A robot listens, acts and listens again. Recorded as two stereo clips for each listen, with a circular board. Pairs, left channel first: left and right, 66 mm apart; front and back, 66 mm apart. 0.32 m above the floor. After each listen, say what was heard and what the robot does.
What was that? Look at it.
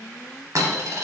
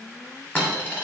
The dropped coin: 60° right. Turn 60° right.
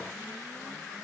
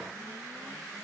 I heard a dropped coin from this way, but can't make it out now.